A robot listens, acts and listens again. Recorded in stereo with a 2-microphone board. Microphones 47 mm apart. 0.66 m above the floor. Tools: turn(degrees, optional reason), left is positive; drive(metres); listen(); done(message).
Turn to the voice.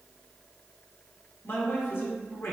turn(degrees=50, reason="The man speaking: about 50° left or 130° left.")
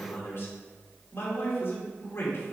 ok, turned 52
turn(degrees=70, reason="So it is at 70° left.")
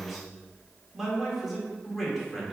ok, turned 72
done("Found it: a man speaking, straight ahead.")